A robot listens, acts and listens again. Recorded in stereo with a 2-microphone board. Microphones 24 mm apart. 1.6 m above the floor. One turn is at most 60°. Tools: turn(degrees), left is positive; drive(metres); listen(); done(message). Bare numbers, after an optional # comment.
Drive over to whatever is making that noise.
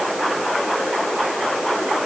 listen()
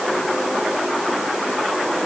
listen()
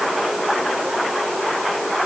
done("I can't make out anything.")